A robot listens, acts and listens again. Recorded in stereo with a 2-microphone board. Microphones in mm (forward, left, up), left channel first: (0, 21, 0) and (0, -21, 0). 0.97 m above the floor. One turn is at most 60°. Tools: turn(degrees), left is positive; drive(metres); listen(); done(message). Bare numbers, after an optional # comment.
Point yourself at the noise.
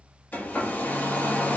# The hair dryer: about 60° left or 120° left.
turn(60)
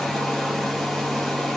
done("Found it: a hair dryer, straight ahead.")